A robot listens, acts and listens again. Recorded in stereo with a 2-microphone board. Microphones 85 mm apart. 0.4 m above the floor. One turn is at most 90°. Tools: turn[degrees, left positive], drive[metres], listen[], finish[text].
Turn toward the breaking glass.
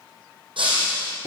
Action: turn[-90]
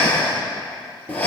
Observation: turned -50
Thought: Nothing new. It was at 40° right.
Action: turn[-40]
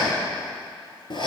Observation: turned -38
Action: finish[Facing where the breaking glass came from. I can't hear it now.]